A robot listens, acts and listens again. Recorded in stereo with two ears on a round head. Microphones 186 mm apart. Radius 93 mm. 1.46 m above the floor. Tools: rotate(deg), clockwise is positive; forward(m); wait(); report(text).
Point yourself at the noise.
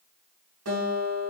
rotate(90)
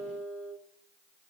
report("Facing the guitar.")